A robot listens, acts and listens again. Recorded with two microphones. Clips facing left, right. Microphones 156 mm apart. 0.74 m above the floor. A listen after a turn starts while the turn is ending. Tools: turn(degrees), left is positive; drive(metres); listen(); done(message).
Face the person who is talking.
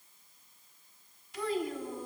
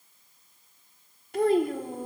turn(degrees=-55)
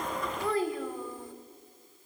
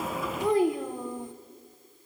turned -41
turn(degrees=-20)
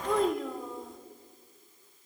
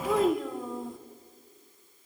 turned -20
done("Found it: a child speaking, straight ahead, 1 to 2 m away.")